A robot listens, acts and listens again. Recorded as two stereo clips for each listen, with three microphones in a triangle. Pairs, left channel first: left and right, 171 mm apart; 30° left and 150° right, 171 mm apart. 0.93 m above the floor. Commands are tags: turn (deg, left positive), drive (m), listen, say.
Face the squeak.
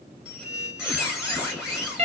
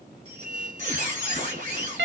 <turn deg="-175"/>
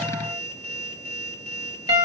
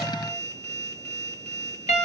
<turn deg="-55"/>
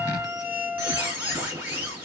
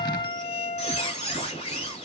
<turn deg="-10"/>
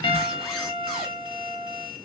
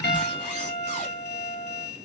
<say>Facing the squeak.</say>